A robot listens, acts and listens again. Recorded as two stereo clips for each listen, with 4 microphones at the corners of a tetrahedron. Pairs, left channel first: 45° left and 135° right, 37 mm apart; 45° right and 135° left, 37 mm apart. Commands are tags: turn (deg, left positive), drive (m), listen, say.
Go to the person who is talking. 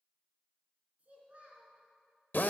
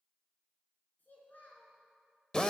<turn deg="-85"/>
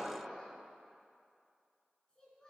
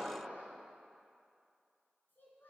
<turn deg="-25"/>
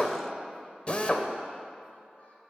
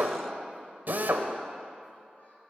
<listen/>
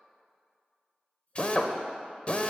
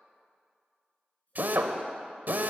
<drive m="1.0"/>
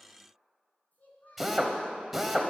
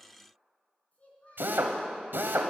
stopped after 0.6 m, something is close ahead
<say>Blocked. The child speaking is further on, straight ahead.</say>